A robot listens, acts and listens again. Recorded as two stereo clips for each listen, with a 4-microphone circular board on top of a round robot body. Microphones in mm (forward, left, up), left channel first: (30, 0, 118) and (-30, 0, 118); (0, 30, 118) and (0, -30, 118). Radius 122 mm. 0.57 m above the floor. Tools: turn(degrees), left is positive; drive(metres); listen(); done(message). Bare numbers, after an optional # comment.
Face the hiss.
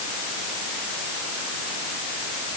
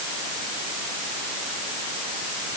listen()
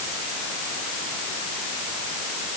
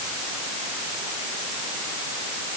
listen()
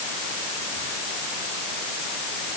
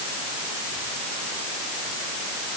done("I can't make out a hiss.")